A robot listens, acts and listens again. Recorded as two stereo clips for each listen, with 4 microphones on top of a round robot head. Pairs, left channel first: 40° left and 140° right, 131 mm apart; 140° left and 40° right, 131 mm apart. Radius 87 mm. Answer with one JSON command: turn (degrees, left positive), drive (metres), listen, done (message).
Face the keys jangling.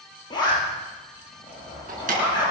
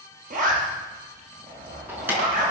{"turn": -120}
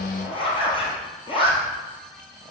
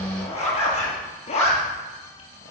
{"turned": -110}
{"turn": -10}
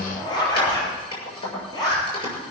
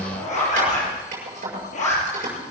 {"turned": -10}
{"turn": -10}
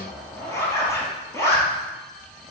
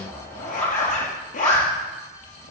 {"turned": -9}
{"listen": true}
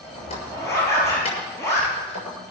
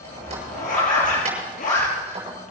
{"done": "Found it: keys jangling, straight ahead."}